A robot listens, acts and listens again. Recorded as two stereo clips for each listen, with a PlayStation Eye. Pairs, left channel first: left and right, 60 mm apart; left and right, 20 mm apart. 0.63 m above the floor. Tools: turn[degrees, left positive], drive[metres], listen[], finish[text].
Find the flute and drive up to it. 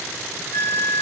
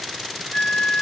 Thought: The flute: about 65° left or 115° left.
Action: turn[65]
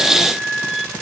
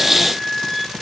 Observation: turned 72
Action: drive[1.0]
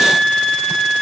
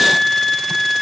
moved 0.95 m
Action: drive[1.0]
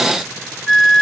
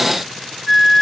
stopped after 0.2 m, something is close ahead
Action: finish[Arrived at the flute, straight ahead.]